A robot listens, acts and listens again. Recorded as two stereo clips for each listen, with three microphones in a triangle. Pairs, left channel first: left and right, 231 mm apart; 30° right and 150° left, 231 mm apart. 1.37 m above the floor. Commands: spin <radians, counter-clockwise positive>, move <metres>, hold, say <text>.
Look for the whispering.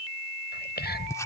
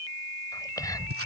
spin 0.79
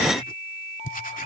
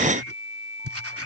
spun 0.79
hold
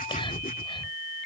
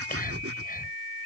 spin 0.35
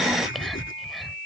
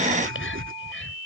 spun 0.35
say Facing the whispering.